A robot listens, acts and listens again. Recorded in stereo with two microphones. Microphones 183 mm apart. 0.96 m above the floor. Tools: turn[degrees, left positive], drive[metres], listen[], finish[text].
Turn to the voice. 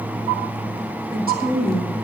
Thought: The woman speaking: about 55° right or 125° right.
Action: turn[-55]
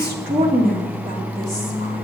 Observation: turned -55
Thought: So it is at 55° right.
Action: turn[-55]
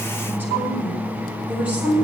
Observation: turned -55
Thought: The woman speaking is now 10° right.
Action: turn[-10]
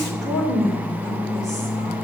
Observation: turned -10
Action: finish[Found it: a woman speaking, straight ahead.]